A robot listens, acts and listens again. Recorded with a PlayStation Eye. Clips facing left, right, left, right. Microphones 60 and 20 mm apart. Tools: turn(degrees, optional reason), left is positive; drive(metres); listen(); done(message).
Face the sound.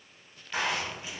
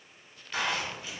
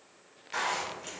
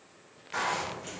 turn(degrees=20, reason="The zipper: about 20° left or 160° left.")
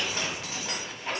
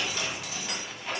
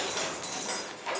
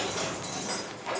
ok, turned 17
turn(degrees=140, reason="So it is at 140° left.")
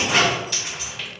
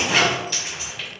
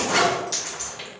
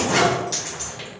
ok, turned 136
done("Facing the zipper.")